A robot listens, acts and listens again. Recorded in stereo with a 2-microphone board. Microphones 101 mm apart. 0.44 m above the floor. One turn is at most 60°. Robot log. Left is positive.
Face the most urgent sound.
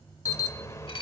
note: The alarm: about 30° left or 150° left.
cmd yaw +30
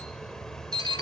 end: Found it: an alarm, straight ahead.